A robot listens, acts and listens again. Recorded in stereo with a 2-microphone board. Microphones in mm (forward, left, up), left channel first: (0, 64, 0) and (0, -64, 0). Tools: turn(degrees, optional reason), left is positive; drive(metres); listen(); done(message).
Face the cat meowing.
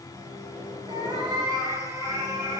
turn(degrees=-25, reason="The cat meowing: about 25° right or 155° right.")
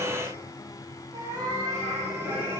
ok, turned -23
turn(degrees=-25, reason="The cat meowing: about 25° right or 155° right.")
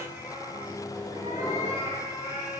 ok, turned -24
turn(degrees=-35, reason="The cat meowing: about 35° right or 145° right.")
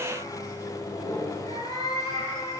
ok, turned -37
turn(degrees=-105, reason="So it is at 105° right.")
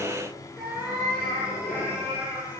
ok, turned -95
turn(degrees=-10, reason="The cat meowing is now 10° right.")
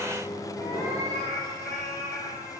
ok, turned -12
done("Facing the cat meowing.")